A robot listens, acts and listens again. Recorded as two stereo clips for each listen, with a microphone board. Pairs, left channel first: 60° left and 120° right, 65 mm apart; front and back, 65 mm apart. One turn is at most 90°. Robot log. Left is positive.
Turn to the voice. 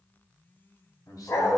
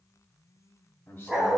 note: The man speaking: 50° left.
cmd yaw +50
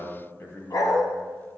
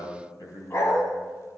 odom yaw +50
note: The man speaking is now 15° left.
cmd yaw +15
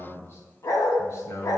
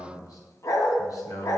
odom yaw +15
note: The man speaking is now 20° left.
cmd yaw +20
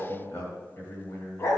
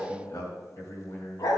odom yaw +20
note: The man speaking is now 20° left.
cmd yaw +20
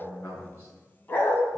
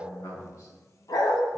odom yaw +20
note: The man speaking is now 10° left.
cmd yaw +10
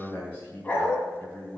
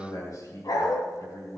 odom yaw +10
end: Found it: a man speaking, straight ahead, 2 to 4 m away.